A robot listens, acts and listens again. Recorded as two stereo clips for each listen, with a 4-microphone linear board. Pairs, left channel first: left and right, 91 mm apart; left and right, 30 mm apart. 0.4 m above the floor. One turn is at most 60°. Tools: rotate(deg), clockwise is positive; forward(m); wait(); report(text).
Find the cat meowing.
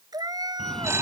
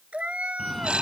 rotate(45)
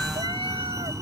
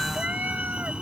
wait()
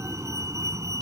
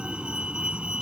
wait()
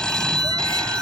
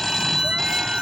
report("I heard a cat meowing, but can't make it out now. It was about straight ahead or 90° right.")